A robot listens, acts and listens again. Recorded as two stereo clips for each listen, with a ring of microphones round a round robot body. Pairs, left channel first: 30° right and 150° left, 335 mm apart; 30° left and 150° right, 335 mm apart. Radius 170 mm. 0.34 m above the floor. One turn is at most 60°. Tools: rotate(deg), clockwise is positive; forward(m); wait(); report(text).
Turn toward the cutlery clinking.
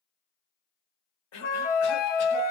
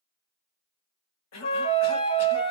wait()
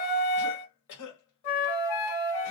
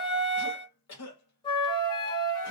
wait()
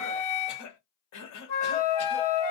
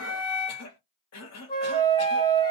report("I can't make out cutlery clinking, only a cough and a flute.")